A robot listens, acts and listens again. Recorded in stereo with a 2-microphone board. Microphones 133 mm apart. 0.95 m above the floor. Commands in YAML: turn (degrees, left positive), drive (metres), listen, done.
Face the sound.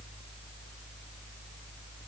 listen: true
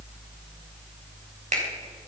turn: -65
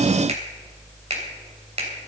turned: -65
turn: -50
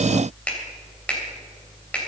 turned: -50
turn: 10
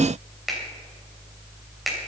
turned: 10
done: "Found it: a finger snap, straight ahead."